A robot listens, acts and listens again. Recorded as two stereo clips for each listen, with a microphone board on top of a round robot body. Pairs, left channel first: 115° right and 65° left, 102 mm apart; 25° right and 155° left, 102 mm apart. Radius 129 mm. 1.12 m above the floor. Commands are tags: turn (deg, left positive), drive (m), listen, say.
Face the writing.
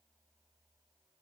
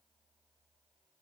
<listen/>
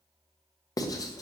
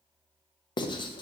<turn deg="-60"/>
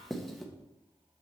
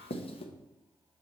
<turn deg="-25"/>
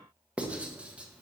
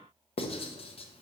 <turn deg="-10"/>
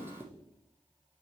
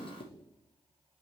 <say>Found it: writing, straight ahead.</say>